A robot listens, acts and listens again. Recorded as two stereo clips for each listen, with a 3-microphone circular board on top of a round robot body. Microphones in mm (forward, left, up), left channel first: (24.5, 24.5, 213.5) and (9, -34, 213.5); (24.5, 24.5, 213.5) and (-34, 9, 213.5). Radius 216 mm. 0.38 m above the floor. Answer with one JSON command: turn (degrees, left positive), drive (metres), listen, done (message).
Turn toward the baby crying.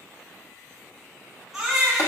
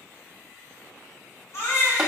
{"turn": -20}
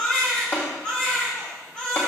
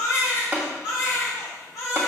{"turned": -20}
{"done": "Found it: a baby crying, straight ahead."}